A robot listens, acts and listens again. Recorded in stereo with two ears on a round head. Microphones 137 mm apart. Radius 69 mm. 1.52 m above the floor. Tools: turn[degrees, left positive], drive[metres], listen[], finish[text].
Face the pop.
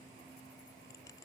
Action: listen[]
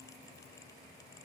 Action: listen[]
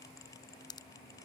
Thought: The pop: about 25° left or 155° left.
Action: turn[25]
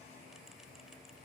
Action: listen[]
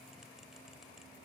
Action: finish[I heard a pop, but can't make it out now. It was about straight ahead or 130° left.]